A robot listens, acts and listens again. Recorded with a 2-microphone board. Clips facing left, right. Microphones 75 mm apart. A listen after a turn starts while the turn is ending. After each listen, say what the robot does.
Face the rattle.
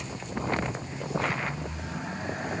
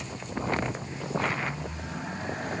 Keep listening.
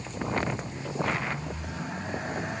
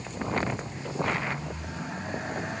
Keep listening.
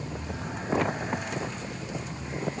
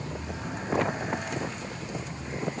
I can't make out a rattle.